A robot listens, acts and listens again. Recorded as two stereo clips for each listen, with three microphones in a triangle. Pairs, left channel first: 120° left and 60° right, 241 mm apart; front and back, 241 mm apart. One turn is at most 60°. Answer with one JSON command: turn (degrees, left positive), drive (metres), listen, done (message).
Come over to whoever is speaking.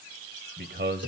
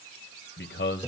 {"turn": -25}
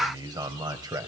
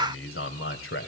{"turn": 10}
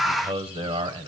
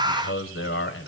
{"drive": 1.0}
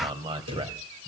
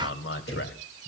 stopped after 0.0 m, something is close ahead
{"done": "Something is in my way. I am facing the man speaking but have not reached it."}